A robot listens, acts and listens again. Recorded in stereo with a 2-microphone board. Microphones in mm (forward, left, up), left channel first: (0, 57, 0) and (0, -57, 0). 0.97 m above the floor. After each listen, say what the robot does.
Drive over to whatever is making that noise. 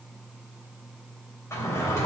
Turn 25° left.
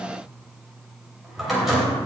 Drive 1.0 m forward.
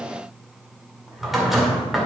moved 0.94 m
Drive 1.0 m forward.
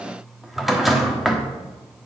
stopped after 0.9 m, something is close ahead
I am next to the drawer.